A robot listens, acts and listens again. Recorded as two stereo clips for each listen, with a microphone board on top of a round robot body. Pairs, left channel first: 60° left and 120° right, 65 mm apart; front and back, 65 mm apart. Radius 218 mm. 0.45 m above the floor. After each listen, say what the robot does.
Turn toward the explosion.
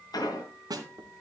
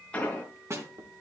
Turn 70° left.
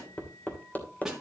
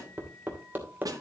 I heard an explosion from this way, but can't make it out now.